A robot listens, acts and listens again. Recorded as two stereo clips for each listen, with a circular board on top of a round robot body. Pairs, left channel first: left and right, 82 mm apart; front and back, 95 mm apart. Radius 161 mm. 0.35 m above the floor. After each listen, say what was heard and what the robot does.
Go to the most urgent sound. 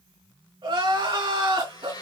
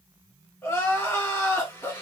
The crying: 70° right. Turn 70° right.
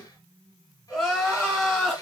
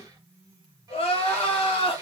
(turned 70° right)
Drive 1.0 m forward.
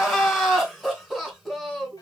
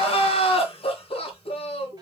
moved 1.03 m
Drive 1.0 m forward.
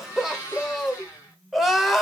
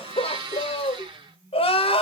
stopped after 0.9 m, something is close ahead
Arrived at the crying, straight ahead.